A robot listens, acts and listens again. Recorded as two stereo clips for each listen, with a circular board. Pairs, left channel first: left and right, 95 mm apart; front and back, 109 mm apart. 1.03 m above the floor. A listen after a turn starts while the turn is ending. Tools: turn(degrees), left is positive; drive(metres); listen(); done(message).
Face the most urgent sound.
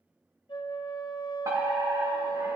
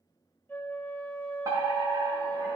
turn(degrees=-135)
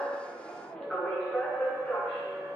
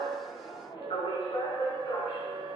turn(degrees=15)
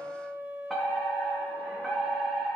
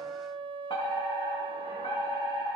done("Facing the fire alarm.")